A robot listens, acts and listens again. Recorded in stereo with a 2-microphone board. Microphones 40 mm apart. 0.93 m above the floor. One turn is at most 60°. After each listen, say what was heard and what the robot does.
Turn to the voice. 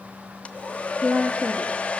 The woman speaking: about 25° right or 155° right. Turn 25° right.
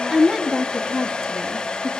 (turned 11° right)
So it is at 10° right. Turn 10° right.
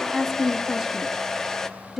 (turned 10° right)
Facing the woman speaking, 1 to 2 m away.